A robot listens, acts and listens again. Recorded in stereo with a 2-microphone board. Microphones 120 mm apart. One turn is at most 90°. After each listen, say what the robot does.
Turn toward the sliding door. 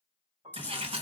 Turn 50° right.
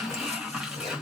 Found it: a sliding door, straight ahead, under 1 m away.